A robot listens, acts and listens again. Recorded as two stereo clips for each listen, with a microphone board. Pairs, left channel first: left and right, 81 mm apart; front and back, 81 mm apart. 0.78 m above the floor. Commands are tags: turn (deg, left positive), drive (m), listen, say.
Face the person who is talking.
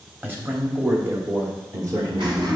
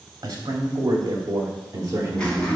<turn deg="-125"/>
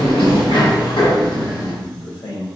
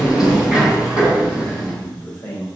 <turn deg="70"/>
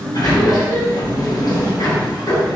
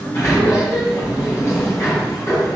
<listen/>
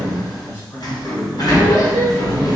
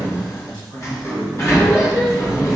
<turn deg="30"/>
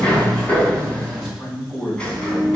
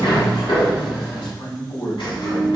<say>Facing the man speaking.</say>